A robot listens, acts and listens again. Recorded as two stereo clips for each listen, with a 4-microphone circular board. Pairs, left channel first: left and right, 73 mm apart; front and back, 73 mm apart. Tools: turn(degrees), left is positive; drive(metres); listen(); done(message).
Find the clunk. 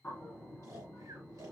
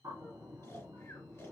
listen()
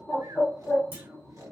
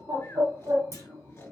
turn(degrees=-150)
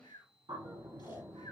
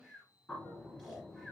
done("I heard a clunk from this way, but can't make it out now.")